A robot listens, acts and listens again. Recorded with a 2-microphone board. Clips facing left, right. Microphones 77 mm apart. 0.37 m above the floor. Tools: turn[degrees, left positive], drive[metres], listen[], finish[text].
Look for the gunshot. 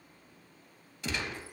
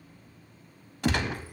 Thought: The gunshot: about 65° right or 115° right.
Action: turn[-65]
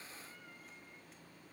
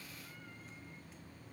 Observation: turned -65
Action: listen[]
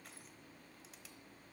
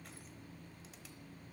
Action: finish[I heard a gunshot, but can't make it out now. It was about straight ahead or 50° right.]